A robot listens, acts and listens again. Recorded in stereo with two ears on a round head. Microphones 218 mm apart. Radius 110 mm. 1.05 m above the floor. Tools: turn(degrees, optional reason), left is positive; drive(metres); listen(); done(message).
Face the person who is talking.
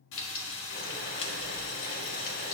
listen()
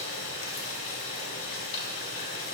listen()
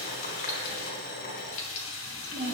turn(degrees=-40, reason="The child speaking: about 40° right or 140° right.")
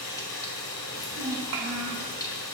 turn(degrees=-100, reason="So it is at 100° right.")
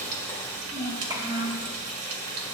turn(degrees=-15, reason="The child speaking is now 15° right.")
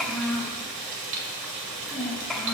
done("Facing the child speaking.")